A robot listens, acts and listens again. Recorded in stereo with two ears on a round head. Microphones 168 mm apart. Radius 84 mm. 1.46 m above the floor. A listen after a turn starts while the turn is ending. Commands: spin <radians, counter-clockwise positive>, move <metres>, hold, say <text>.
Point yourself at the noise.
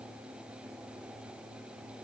hold
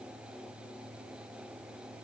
hold
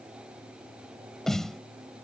spin 0.52
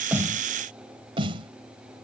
spin -0.52
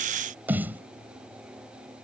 spin -0.17
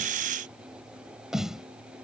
say Facing the snare drum.